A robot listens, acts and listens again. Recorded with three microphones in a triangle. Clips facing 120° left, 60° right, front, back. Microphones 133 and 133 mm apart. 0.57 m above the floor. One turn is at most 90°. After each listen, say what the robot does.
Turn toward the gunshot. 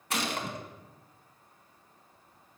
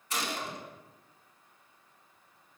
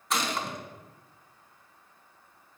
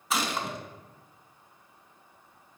Turn 90° left.
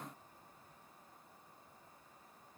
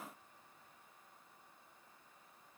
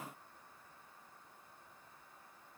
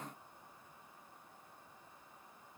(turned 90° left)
Facing where the gunshot came from. I can't hear it now.